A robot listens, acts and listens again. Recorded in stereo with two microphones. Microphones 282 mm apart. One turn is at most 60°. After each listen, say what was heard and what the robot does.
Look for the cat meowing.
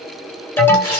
Keep listening.
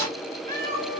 The cat meowing: about 30° right or 150° right. Turn 30° right.
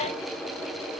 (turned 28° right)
Keep listening.
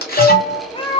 So it is at 20° left. Turn 20° left.
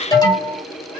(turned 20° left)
The cat meowing is now 30° left. Turn 30° left.
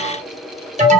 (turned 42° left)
Nothing new. It was at 15° right. Turn 15° right.
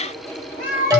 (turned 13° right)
The cat meowing is now 30° left. Turn 30° left.
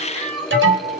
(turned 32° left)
Found it: a cat meowing, straight ahead.